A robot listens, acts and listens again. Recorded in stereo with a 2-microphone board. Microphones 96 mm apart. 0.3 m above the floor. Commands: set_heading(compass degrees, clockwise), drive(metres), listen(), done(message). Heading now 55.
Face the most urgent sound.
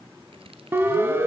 set_heading(80)
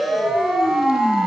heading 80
done("Found it: a siren, straight ahead.")